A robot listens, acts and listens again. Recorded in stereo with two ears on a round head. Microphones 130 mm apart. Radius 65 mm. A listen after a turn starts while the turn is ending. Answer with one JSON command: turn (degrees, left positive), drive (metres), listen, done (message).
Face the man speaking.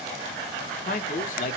{"turn": 60}
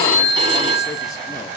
{"listen": true}
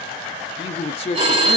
{"turn": 45}
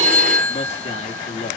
{"turn": 50}
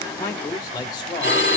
{"turn": 30}
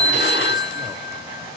{"listen": true}
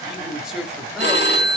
{"done": "Facing the man speaking."}